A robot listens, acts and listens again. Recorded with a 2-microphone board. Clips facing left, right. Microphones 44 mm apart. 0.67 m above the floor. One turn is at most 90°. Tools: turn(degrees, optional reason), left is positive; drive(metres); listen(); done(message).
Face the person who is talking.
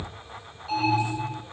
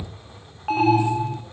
listen()
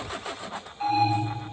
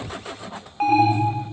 listen()
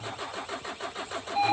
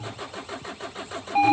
done("I can't make out anyone speaking, only an alarm.")